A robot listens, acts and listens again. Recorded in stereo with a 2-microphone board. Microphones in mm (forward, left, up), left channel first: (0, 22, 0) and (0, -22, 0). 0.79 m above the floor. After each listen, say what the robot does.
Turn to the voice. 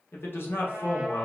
Turn 60° left.
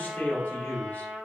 Turn 45° left.
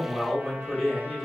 Facing the man speaking.